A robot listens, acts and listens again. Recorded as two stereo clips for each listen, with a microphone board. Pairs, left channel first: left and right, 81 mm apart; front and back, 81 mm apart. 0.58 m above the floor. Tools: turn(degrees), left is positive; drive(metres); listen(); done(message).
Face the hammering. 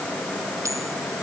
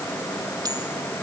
listen()
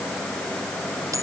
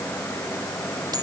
listen()
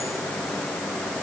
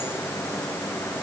done("I can't make out hammering.")